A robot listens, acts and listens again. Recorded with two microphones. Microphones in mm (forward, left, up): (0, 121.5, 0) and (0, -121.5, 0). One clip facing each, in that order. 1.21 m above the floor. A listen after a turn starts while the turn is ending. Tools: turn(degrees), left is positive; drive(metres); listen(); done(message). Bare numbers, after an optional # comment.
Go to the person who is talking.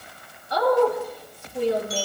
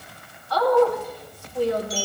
# The woman speaking: about 20° left or 160° left.
turn(20)
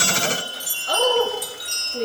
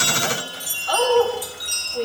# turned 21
# So it is at 135° left.
turn(135)
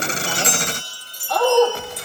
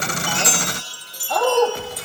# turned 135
drive(1.0)
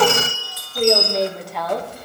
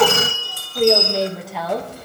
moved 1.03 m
drive(1.0)
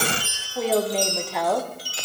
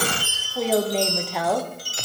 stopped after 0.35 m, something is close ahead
done("I am next to the woman speaking.")